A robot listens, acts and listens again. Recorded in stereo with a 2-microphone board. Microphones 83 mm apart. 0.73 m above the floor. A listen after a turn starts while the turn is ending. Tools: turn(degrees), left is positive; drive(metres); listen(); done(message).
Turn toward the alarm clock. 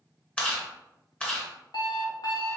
turn(degrees=65)
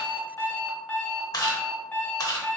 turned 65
turn(degrees=25)
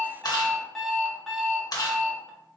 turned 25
done("Facing the alarm clock.")